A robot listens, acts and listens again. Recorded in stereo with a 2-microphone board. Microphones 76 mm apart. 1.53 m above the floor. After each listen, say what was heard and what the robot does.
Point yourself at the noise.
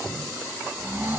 The snoring: about 30° right or 150° right. Turn 30° right.
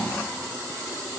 Facing the snoring.